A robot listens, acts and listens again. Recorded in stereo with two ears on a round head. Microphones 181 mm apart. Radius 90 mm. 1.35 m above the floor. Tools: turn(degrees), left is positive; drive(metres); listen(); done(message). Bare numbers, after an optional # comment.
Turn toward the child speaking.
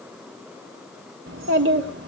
# The child speaking: about 60° right or 120° right.
turn(-60)
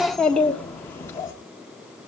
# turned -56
# So it is at 15° left.
turn(15)
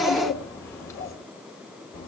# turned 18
# The child speaking is now 20° left.
turn(20)
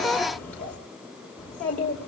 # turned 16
done("Found it: a child speaking, straight ahead, 2 to 4 m away.")